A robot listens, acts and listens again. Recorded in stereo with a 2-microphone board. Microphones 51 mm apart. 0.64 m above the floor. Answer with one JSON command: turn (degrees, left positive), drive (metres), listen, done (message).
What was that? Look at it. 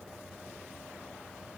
{"listen": true}
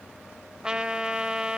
{"turn": -15}
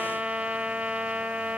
{"turn": -150}
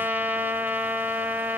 {"turn": -40}
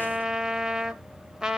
{"turn": -15}
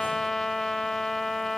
{"done": "Found it: a trumpet, straight ahead, under 1 m away."}